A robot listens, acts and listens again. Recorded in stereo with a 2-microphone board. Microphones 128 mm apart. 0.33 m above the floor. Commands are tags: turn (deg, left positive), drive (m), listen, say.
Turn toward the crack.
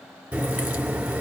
<turn deg="-30"/>
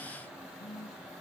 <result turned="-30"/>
<listen/>
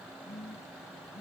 <say>I heard a crack, but can't make it out now. It was about 20° left or 140° right.</say>